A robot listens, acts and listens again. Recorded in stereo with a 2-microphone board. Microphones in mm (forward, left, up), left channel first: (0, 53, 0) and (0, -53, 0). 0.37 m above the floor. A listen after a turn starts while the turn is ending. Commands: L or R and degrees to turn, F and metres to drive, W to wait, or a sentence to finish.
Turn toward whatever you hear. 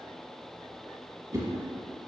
R30
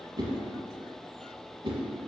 R120
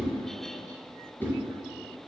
L20
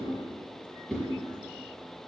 Found it: a whoosh, straight ahead.